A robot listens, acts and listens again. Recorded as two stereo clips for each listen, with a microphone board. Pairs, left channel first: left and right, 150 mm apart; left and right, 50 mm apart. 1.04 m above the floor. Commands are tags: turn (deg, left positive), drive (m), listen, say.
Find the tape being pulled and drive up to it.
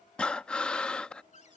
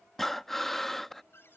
<listen/>
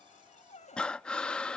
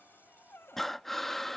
<listen/>
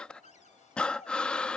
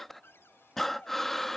<say>I can't make out tape being pulled to turn to.</say>